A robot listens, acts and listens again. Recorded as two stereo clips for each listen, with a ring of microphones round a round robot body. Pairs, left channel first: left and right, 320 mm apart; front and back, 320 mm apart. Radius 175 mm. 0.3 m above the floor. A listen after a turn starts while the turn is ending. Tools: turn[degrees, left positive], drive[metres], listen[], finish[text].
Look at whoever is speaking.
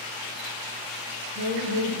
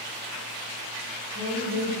Thought: The woman speaking: 25° right.
Action: turn[-25]
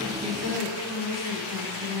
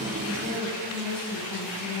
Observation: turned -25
Action: finish[Found it: a woman speaking, straight ahead, 1 to 2 m away.]